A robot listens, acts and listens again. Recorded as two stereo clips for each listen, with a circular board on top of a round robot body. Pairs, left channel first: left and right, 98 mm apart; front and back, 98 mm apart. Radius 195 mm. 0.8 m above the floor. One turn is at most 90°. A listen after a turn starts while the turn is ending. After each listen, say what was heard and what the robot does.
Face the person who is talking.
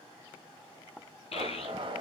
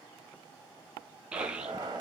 The child speaking: 100° left. Turn 90° left.
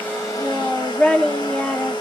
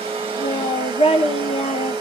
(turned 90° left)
The child speaking is now 10° left. Turn 10° left.
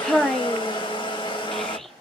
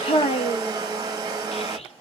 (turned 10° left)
Facing the child speaking.